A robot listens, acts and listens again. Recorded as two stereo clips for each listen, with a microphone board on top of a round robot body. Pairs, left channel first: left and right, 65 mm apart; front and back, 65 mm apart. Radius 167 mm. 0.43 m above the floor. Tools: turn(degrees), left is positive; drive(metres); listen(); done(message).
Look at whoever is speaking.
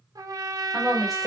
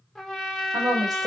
turn(degrees=180)
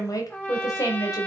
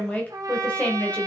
turn(degrees=65)
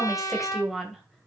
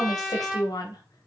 done("Facing the woman speaking.")